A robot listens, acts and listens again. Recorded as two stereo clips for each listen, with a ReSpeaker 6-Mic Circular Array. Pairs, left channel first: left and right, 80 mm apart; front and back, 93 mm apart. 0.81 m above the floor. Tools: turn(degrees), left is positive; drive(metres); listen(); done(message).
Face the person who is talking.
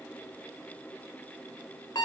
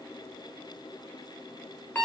listen()
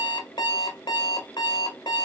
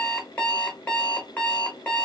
listen()
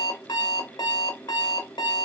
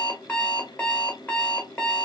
done("I can't make out anyone speaking, only an alarm clock.")